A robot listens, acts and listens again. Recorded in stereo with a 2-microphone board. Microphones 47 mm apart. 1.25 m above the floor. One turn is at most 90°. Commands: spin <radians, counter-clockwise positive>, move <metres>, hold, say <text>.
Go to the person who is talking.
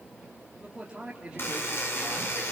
spin -0.35
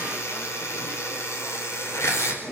hold
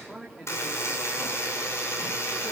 move 1.0
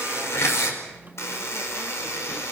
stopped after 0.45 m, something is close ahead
hold
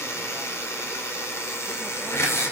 hold
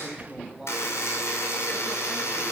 spin -0.17
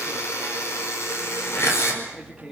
spin -0.17
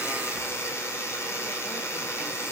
hold
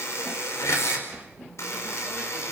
hold
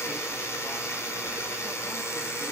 say I heard a man speaking from this way, but can't make it out now. I did not reach it.